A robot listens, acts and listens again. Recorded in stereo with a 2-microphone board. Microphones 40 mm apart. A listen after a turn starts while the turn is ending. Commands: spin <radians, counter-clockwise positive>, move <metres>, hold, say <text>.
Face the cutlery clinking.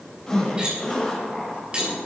spin -0.44
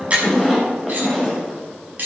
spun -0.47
spin -2.27
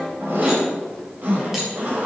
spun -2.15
hold
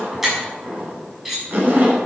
say Facing the cutlery clinking.